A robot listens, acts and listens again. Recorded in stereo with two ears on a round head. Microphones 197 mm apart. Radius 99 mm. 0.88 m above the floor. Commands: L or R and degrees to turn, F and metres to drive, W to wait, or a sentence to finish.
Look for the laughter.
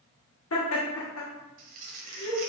L70
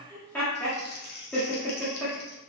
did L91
L10
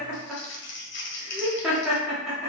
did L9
Found it: laughter, straight ahead.